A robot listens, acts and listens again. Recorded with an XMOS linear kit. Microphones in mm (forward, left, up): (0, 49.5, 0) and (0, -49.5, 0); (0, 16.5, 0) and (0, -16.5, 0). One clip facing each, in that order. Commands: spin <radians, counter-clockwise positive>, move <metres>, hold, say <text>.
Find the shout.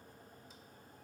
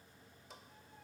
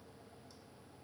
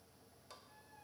hold
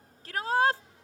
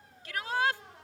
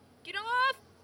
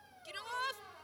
spin 0.70
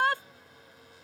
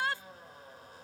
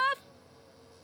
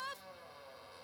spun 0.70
spin 1.66
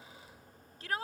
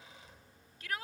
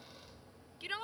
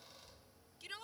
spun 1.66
spin 0.70
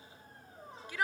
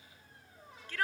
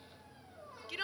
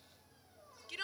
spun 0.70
spin 0.26
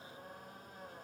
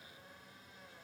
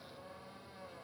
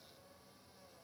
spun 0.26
hold
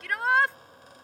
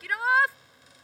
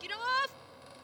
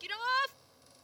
say Found it: a shout, straight ahead.